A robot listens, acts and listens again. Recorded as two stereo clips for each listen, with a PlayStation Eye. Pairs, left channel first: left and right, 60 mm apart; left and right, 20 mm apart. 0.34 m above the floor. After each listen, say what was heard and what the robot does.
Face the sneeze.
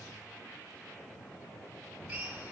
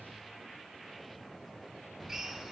Keep listening.
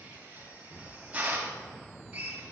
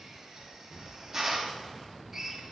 Keep listening.
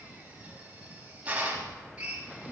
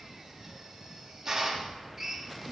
I can't make out a sneeze to turn to.